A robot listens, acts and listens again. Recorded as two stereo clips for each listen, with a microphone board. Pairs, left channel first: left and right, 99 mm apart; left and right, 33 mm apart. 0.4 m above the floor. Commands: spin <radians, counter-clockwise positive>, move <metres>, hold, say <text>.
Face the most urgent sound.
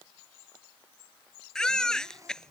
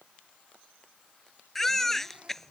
spin 0.52
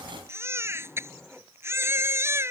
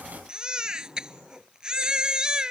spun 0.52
spin -0.44
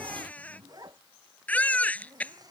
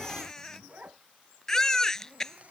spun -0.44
spin 0.26
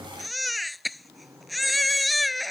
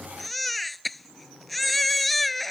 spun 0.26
say Facing the baby crying.